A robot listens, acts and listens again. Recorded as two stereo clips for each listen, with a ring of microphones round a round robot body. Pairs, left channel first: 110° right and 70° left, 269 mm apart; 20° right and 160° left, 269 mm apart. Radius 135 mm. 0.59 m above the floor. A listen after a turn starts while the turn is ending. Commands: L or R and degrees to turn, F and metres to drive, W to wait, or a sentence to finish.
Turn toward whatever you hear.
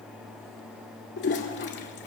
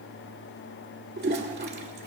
R155
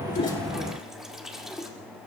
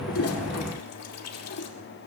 R20
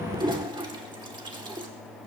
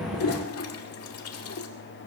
Facing the toilet flushing.